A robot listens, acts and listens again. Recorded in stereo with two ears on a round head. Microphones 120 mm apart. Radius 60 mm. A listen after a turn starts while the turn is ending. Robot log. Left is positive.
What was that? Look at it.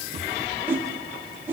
note: The whoosh: about 15° right or 165° right.
cmd yaw -15
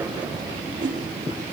note: So it is at 145° right.
cmd yaw -145
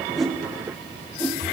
cmd idle
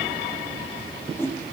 note: The whoosh is now 20° left.
cmd yaw +20
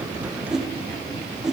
end: Facing the whoosh, 1 to 2 m away.